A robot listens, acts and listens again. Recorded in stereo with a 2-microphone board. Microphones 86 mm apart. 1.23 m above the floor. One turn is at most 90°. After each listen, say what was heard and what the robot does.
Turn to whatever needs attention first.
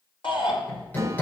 Turn 90° left.
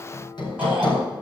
Keep listening.
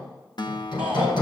The shout is now 15° right. Turn 15° right.
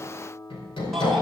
Keep listening.
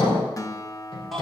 Facing the shout.